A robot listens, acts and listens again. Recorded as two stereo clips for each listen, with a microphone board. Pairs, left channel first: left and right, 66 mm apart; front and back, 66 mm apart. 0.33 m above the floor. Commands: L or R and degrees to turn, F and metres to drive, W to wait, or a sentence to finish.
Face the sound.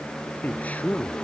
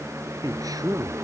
L160
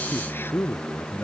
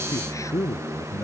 L40
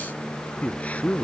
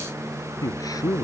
L25
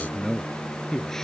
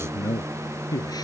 Facing the man speaking.